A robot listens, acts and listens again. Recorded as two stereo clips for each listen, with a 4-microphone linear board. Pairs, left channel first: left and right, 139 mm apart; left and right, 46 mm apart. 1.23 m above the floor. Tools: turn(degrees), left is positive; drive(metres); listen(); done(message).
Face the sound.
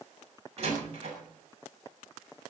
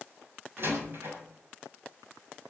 turn(degrees=-50)
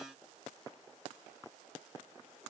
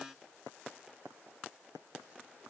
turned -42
listen()
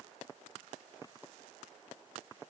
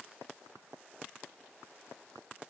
done("I heard a door slam, but can't make it out now. It was about 10° right or 85° right.")